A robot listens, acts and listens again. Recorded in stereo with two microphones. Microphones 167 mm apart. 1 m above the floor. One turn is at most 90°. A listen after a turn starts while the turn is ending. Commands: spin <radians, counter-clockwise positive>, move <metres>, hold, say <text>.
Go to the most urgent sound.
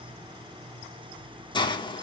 hold
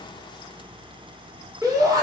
spin -0.35
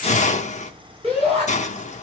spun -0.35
spin -1.57
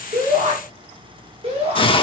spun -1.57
spin -0.70
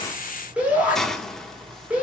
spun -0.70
spin -0.17
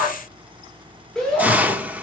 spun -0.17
move 1.0
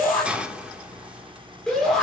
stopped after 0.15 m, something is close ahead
say Something is in my way. I am facing the shout but have not reached it.